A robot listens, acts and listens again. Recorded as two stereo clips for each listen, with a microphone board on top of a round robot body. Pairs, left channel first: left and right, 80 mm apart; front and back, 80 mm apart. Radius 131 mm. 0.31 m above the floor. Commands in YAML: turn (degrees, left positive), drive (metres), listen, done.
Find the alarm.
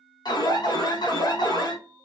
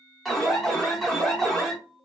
turn: 90
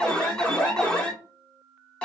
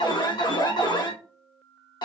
turn: 15
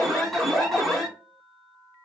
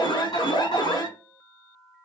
done: "Facing the alarm."